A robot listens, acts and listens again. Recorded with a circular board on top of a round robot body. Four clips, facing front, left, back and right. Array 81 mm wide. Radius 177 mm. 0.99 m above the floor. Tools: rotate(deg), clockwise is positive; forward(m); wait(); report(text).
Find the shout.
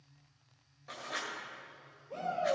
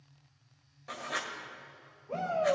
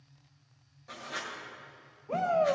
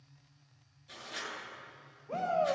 rotate(170)
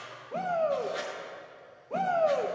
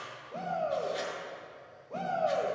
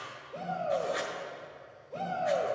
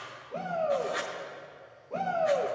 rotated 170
rotate(10)
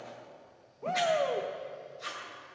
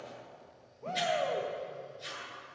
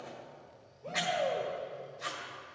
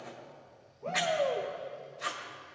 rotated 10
report("Found it: a shout, straight ahead, 1 to 2 m away.")